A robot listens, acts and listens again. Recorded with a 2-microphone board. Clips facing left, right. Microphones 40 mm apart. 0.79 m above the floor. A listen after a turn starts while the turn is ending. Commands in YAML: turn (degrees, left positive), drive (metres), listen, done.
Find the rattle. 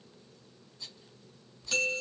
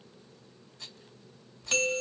turn: -90
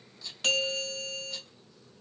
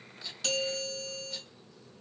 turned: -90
listen: true
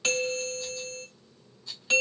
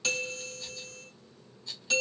done: "Facing the rattle."